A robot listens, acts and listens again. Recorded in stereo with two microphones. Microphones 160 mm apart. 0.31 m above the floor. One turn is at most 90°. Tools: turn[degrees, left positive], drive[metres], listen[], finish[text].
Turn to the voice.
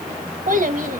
Thought: The child speaking: about 60° right or 120° right.
Action: turn[-60]
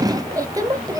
Thought: So it is at 25° right.
Action: turn[-25]
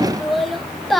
Action: finish[Found it: a child speaking, straight ahead.]